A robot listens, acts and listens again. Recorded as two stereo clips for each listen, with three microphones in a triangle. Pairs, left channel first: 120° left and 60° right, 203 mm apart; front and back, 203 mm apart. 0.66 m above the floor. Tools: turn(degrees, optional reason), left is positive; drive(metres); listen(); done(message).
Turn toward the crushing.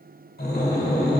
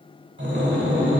listen()
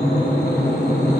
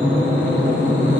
listen()
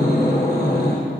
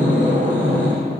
done("I can't make out crushing to turn to.")